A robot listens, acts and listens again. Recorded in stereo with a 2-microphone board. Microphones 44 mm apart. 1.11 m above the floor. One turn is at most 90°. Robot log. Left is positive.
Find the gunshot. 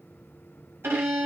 cmd idle
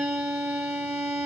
cmd idle
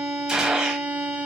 note: The gunshot: about 20° right or 160° right.
cmd yaw -20
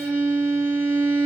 cmd idle
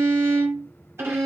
end: I heard a gunshot, but can't make it out now. It was about straight ahead or 140° right.